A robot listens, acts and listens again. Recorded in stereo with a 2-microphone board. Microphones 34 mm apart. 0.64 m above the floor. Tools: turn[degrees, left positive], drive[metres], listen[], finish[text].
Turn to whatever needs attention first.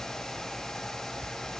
Action: listen[]
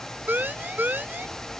Thought: The siren: about 60° right or 120° right.
Action: turn[-60]
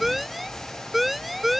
Action: finish[Found it: a siren, straight ahead.]